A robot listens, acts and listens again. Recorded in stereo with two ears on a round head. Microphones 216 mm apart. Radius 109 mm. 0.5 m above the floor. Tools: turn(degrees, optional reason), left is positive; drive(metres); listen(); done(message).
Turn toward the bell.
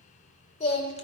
listen()
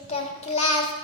listen()
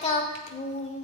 done("I can't make out a bell, only singing.")